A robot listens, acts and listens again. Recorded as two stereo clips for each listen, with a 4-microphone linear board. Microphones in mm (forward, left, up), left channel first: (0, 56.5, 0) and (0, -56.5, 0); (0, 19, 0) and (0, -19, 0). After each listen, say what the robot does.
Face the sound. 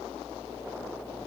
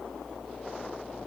Keep listening.
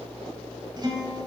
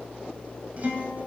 Turn 40° right.
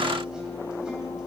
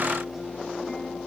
Found it: a guitar, straight ahead, 2 to 4 m away.